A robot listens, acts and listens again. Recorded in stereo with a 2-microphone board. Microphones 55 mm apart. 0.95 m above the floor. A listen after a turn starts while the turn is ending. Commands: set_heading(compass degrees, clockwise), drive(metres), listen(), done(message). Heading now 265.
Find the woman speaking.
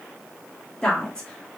set_heading(250)
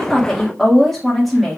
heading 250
done("Facing the woman speaking, 1 to 2 m away.")